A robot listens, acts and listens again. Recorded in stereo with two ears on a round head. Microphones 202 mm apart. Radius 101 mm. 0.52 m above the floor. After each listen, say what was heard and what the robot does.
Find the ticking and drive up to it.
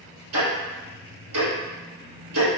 The ticking: about 65° right or 115° right. Turn 65° right.
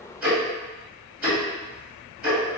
Drive 1.0 m forward.
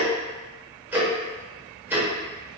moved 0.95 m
The ticking is now 10° right. Turn 10° right.
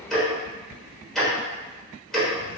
Drive 1.0 m forward.
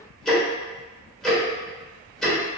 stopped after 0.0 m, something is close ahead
I am next to the ticking.